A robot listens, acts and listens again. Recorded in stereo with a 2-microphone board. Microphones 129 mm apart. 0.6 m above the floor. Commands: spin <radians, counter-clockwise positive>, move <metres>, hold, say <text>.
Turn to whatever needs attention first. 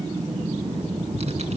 hold
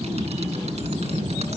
hold
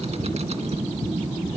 say I can't make out anything urgent.